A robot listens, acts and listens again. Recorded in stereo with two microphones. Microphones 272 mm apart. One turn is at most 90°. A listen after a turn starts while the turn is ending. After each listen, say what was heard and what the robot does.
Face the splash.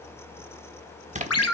The splash: about 25° right or 155° right. Turn 25° right.
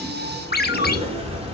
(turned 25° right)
Keep listening.
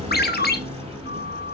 I heard a splash, but can't make it out now. It was about straight ahead or 130° right.